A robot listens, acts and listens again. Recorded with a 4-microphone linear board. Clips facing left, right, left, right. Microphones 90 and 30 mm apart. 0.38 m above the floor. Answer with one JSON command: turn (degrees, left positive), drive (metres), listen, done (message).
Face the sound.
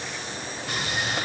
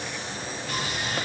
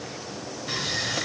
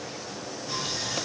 {"turn": 75}
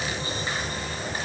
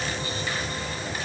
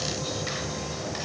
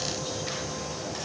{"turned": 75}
{"turn": 25}
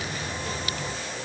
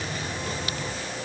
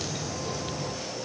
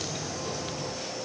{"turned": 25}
{"done": "Facing the sawing."}